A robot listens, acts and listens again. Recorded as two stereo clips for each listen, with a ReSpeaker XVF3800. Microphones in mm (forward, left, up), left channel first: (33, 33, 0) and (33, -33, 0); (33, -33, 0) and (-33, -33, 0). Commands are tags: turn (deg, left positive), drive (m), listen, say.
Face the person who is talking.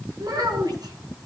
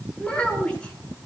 <turn deg="-75"/>
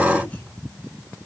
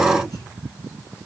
<listen/>
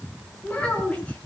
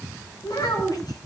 <turn deg="20"/>
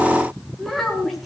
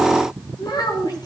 <say>Found it: a child speaking, straight ahead.</say>